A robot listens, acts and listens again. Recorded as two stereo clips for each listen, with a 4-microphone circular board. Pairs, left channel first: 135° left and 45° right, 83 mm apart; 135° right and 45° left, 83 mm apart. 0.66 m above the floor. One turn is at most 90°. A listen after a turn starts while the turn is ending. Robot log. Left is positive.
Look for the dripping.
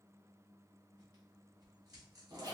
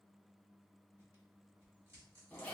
cmd idle
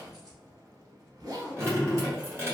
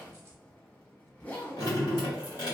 note: The dripping: 100° right.
cmd yaw -90
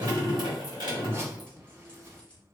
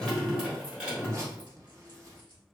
note: The dripping is now 30° right.
cmd yaw -30
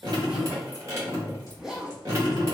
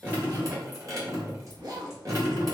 end: Facing the dripping, 1 to 2 m away.